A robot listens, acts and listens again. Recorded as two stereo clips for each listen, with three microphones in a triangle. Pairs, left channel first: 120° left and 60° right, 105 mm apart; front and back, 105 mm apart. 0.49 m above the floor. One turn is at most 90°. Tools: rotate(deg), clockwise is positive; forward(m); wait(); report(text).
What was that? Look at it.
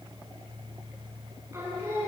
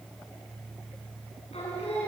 report("Facing the singing, over 4 m away.")